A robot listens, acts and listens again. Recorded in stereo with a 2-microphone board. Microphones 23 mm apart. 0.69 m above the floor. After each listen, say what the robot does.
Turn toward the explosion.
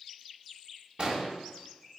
Turn 35° right.
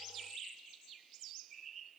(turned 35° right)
Keep listening.
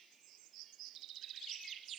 I heard an explosion, but can't make it out now. It was about straight ahead or 110° right.